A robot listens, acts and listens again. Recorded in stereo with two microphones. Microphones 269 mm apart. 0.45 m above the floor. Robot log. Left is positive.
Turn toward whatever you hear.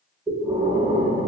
note: The breathing: about 20° right or 160° right.
cmd yaw -20
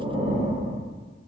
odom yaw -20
note: So it is at 140° right.
cmd yaw -140
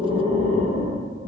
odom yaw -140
note: The breathing is now 25° right.
cmd yaw -25
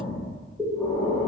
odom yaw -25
end: Found it: breathing, straight ahead, under 1 m away.